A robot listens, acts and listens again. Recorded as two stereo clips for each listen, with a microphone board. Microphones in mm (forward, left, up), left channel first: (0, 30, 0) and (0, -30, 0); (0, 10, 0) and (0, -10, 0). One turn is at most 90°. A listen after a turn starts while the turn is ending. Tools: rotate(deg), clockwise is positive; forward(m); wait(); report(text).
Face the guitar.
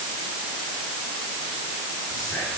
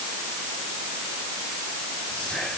wait()
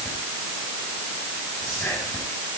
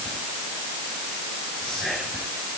wait()
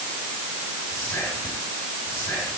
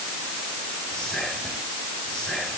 report("I can't make out a guitar to turn to.")